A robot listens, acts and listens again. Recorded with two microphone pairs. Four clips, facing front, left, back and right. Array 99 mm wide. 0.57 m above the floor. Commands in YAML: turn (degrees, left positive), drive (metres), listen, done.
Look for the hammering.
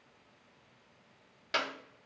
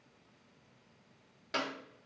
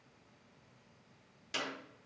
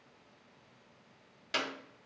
listen: true
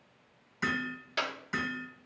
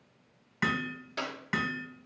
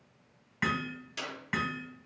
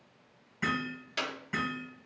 turn: 120
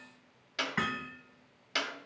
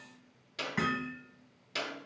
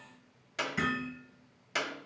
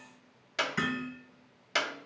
turn: 25
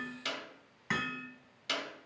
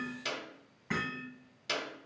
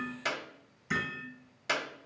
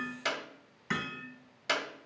turn: -10
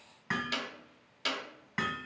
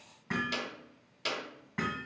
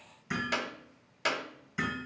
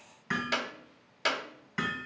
done: "Found it: hammering, straight ahead, 2 to 4 m away."